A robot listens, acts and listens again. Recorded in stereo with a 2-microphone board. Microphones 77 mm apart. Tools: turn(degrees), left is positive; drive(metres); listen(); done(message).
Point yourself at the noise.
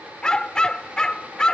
turn(degrees=30)
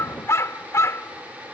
turn(degrees=140)
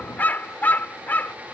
turn(degrees=25)
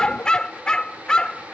turn(degrees=10)
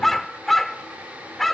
done("Facing the dog barking.")